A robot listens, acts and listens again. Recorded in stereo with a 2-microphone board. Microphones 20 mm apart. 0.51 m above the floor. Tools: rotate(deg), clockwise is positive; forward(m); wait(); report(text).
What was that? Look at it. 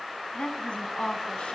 rotate(-90)
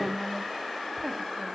report("Facing the woman speaking.")